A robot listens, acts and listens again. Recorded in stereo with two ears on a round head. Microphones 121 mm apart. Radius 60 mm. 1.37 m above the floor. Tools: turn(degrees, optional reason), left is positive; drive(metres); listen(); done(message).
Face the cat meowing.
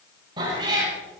turn(degrees=-35, reason="The cat meowing: about 35° right or 145° right.")
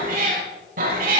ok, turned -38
turn(degrees=-110, reason="So it is at 110° right.")
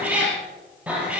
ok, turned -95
turn(degrees=-10, reason="The cat meowing is now 10° right.")
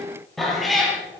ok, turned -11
done("Found it: a cat meowing, straight ahead.")